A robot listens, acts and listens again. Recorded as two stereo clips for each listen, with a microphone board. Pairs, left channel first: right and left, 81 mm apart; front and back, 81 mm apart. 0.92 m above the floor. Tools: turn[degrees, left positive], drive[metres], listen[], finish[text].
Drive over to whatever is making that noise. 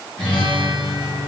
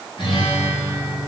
Thought: The guitar: 10° right.
Action: turn[-10]
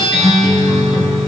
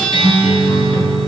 Action: drive[1.0]
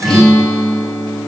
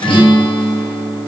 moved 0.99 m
Action: drive[1.0]
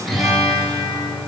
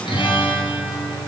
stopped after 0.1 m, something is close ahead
Action: finish[I am next to the guitar.]